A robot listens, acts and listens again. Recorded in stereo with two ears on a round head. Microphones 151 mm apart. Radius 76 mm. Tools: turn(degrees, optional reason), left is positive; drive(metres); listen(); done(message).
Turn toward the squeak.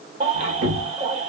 turn(degrees=-70, reason="The squeak: about 70° right or 110° right.")
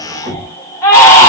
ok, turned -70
turn(degrees=-25, reason="So it is at 25° right.")
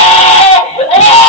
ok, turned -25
listen()
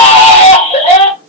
listen()
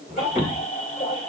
done("Facing the squeak, 2 to 4 m away.")